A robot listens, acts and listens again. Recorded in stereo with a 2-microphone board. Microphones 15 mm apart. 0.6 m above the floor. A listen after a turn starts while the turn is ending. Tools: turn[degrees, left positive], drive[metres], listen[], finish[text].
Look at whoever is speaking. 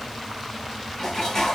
Action: listen[]
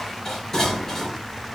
Action: listen[]
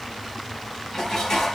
Action: finish[I can't make out anyone speaking, only dishes clattering.]